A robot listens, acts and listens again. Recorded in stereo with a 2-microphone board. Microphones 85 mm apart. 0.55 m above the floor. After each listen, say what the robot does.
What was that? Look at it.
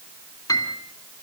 Turn 50° left.
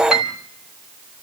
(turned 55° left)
Facing the piano, 2 to 4 m away.